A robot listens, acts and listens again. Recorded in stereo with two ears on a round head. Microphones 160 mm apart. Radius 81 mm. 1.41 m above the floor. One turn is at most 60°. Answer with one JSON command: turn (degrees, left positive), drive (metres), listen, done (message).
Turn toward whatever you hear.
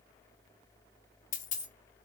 {"turn": 45}
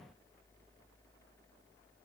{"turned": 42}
{"listen": true}
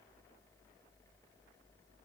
{"done": "I heard a dropped coin, but can't make it out now. It was about 5° left or 90° left."}